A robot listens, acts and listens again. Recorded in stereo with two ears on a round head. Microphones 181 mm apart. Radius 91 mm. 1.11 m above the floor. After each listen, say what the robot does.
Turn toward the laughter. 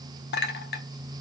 Keep listening.
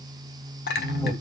Turn 15° left.
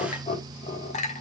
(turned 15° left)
Turn 35° left.
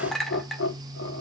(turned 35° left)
Turn 115° left.
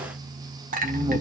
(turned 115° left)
Turn 20° right.
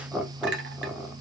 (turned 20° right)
Found it: laughter, straight ahead.